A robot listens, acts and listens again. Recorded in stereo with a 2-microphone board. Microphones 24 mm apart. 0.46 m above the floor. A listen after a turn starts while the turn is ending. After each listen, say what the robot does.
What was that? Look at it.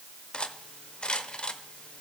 Turn 45° left.
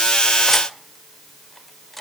Facing the cutlery clinking, under 1 m away.